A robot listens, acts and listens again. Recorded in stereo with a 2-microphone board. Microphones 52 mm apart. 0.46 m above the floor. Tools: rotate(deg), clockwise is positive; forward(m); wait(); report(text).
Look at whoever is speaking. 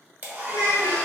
rotate(-60)
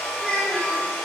rotate(-30)
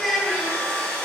report("Found it: a child speaking, straight ahead, 1 to 2 m away.")